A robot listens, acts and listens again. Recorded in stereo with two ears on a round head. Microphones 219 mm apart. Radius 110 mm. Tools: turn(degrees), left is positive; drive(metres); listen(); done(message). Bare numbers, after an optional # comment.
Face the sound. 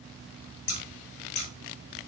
# The scissors: about 60° left or 120° left.
turn(60)
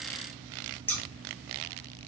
# So it is at 10° left.
turn(10)
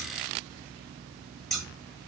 done("Found it: scissors, straight ahead.")